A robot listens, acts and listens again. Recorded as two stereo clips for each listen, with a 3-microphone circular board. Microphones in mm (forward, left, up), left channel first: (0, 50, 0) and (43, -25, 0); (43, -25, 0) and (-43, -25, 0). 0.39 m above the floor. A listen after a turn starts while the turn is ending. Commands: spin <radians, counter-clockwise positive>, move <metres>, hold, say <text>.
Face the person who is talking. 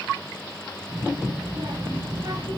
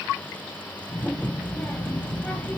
spin -1.31
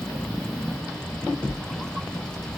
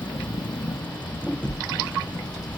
spin 0.61
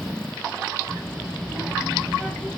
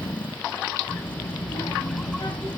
spin 0.35
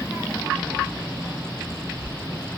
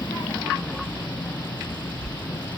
say Facing the child speaking.